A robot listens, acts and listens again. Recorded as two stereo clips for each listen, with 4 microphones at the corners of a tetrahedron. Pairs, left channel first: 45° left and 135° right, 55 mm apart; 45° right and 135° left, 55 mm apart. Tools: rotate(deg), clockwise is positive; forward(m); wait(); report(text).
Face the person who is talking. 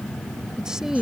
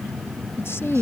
rotate(50)
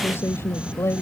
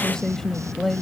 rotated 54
rotate(-45)
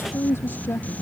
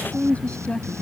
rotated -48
rotate(-15)
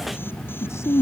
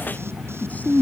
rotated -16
rotate(-15)
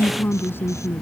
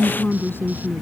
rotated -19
report("Found it: a woman speaking, straight ahead.")